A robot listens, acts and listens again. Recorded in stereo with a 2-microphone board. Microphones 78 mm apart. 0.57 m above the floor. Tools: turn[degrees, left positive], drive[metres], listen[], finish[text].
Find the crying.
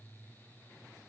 Action: listen[]
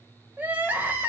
Thought: The crying: about 25° right or 155° right.
Action: turn[-25]
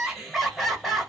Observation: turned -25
Action: finish[Facing the crying, 1 to 2 m away.]